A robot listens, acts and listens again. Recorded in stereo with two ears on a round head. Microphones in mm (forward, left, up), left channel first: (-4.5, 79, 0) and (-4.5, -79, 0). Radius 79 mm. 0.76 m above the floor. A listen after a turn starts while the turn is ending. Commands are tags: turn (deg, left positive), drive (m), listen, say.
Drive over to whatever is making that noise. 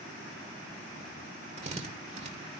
<turn deg="-40"/>
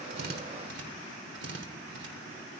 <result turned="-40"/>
<turn deg="-100"/>
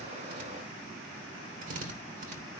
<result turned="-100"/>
<turn deg="-45"/>
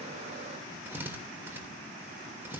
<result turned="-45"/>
<turn deg="-15"/>
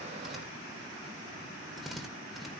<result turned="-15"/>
<drive m="1.0"/>
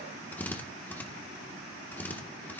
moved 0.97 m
<turn deg="10"/>
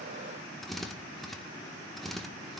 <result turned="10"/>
<drive m="1.0"/>
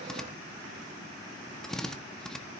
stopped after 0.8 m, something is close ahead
<say>I am next to the drill.</say>